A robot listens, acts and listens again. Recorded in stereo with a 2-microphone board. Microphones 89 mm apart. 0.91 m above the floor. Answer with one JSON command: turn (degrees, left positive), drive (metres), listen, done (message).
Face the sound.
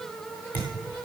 {"turn": 20}
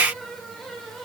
{"listen": true}
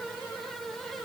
{"done": "I heard a thud, but can't make it out now. It was about straight ahead or 140° left."}